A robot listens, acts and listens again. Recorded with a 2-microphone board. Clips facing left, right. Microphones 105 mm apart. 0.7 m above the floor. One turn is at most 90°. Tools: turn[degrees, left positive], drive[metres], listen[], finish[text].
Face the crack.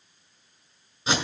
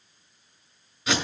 Action: listen[]
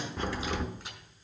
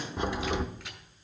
Thought: The crack: about 15° right or 165° right.
Action: turn[-15]
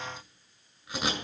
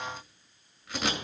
Action: listen[]
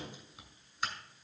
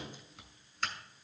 Action: finish[I heard a crack, but can't make it out now. It was about straight ahead or 150° right.]